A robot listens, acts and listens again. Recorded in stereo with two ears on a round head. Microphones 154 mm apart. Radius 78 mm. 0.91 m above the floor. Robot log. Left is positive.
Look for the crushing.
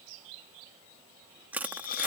cmd yaw -30
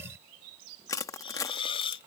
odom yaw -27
note: So it is at 20° left.
cmd yaw +20
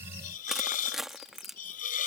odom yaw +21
end: Facing the crushing.